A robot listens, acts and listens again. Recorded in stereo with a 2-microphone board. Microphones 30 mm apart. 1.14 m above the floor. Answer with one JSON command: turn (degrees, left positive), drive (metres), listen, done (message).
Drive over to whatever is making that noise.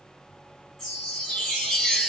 {"turn": 20}
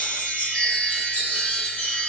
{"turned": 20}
{"turn": 140}
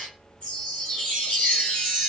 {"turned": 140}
{"turn": 40}
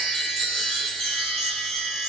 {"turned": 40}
{"drive": 1.0}
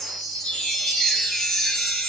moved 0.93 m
{"turn": 15}
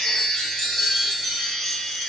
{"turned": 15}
{"drive": 1.0}
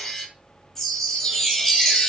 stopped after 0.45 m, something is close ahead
{"turn": 10}
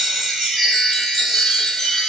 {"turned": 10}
{"done": "Arrived at the chime, straight ahead."}